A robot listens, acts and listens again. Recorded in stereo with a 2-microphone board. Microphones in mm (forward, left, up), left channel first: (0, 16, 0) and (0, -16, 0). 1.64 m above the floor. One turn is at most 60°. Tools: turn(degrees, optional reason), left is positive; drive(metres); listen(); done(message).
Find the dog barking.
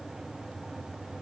listen()
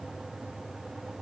listen()
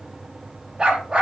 turn(degrees=-30, reason="The dog barking: about 30° right or 150° right.")
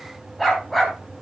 done("Found it: a dog barking, straight ahead.")